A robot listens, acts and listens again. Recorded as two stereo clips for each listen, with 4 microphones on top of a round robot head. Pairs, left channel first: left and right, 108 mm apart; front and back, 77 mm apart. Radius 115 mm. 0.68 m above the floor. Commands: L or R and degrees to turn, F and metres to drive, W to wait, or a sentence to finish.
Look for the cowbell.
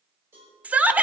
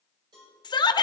R160
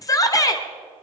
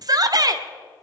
W
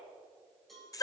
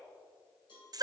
Found it: a cowbell, straight ahead, over 4 m away.